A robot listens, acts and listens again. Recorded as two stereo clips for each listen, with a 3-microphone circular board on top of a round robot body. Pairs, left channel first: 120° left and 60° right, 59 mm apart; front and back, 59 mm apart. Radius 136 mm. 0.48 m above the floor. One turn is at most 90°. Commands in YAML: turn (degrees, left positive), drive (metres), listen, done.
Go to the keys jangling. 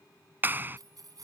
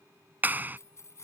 turn: -45
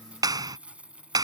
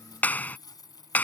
turn: 10
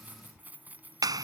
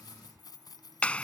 drive: 1.0
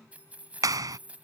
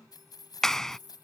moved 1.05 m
turn: 10
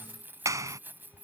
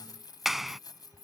drive: 1.0
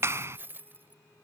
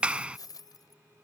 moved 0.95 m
drive: 1.0
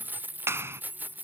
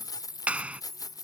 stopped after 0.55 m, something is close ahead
done: "Arrived at the keys jangling, straight ahead."